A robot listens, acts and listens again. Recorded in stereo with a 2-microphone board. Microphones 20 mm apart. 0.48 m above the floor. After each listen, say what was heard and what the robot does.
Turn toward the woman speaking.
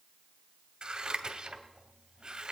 Keep listening.
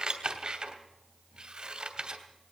Keep listening.
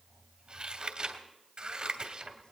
I can't make out a woman speaking to turn to.